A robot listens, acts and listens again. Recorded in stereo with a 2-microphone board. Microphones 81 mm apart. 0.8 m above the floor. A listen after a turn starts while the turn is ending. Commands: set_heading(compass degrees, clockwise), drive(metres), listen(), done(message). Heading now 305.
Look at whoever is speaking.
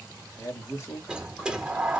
set_heading(265)
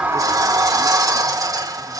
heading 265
listen()
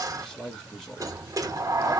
done("Found it: a man speaking, straight ahead.")